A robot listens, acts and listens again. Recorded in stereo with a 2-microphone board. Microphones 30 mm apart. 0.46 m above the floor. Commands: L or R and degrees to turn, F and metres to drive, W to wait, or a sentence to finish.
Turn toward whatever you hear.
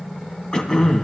L25
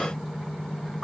W
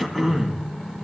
Found it: throat clearing, straight ahead, 2 to 4 m away.